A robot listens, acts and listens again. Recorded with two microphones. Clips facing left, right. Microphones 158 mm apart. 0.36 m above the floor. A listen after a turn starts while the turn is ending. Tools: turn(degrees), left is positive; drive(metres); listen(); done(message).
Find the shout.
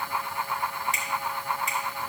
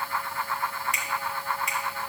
listen()
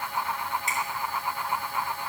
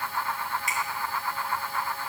listen()
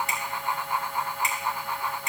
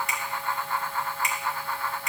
done("I can't make out a shout to turn to.")